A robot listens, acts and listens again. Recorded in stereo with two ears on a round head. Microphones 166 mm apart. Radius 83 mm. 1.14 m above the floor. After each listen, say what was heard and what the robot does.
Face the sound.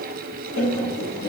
Turn 90° left.
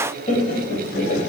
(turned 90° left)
So it is at 50° left. Turn 50° left.
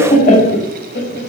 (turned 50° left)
The laughter is now 55° left. Turn 55° left.
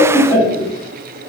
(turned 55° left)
The laughter is now 20° left. Turn 20° left.
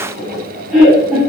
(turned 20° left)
Facing the laughter, 1 to 2 m away.